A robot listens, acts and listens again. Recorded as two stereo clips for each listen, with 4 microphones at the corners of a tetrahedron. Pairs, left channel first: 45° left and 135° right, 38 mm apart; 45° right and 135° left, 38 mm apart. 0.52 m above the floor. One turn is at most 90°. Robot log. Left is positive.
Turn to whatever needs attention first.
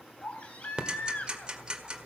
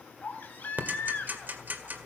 end: Found it: a baby crying, straight ahead, 2 to 4 m away.